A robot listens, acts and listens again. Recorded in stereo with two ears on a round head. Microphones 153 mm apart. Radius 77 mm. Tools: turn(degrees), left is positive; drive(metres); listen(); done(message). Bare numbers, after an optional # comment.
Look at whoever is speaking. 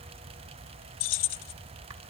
listen()
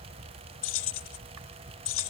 listen()
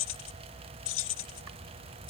done("I can't make out anyone speaking, only keys jangling.")